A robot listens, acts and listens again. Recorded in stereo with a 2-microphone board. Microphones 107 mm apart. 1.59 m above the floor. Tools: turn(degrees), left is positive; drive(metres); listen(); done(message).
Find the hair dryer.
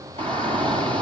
listen()
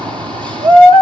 listen()
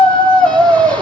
done("I can't make out a hair dryer, only a shout.")